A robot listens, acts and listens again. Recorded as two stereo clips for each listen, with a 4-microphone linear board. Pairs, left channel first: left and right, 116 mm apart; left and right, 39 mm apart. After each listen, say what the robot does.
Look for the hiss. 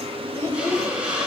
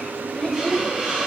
Turn 30° right.
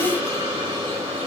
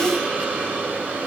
Turn 140° right.
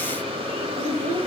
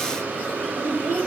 Keep listening.
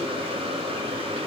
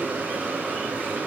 Keep listening.
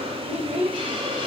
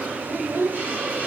Turn 50° right.
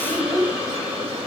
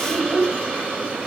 Turn 10° right.
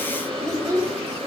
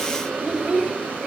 Keep listening.
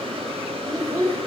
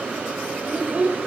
Keep listening.
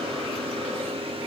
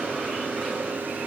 Facing where the hiss came from. I can't hear it now.